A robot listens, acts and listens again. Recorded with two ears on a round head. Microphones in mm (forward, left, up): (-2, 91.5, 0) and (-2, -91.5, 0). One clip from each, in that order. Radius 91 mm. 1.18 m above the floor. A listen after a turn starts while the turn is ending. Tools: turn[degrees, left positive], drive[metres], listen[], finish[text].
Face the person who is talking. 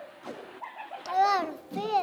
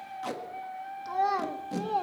Thought: The child speaking: about 65° left or 115° left.
Action: turn[65]
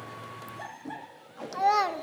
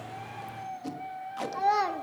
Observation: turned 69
Thought: So it is at 25° left.
Action: turn[25]
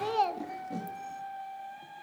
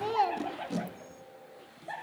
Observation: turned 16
Thought: The child speaking is now 10° left.
Action: turn[10]
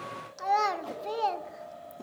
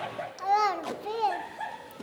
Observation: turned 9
Action: finish[Found it: a child speaking, straight ahead, under 1 m away.]